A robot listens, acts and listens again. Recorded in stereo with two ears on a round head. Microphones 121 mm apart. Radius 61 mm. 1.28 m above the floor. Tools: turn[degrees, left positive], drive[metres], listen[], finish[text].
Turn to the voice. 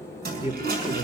Thought: The man speaking: about 20° right or 160° right.
Action: turn[-20]
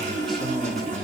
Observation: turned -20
Action: finish[Facing the man speaking, 2 to 4 m away.]